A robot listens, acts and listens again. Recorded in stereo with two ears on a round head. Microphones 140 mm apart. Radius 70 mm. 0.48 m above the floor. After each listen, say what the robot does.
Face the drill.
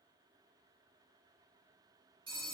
Keep listening.
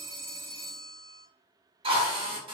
Turn 35° right.
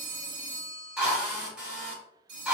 Turn 10° right.
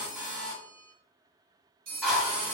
Found it: a drill, straight ahead, 1 to 2 m away.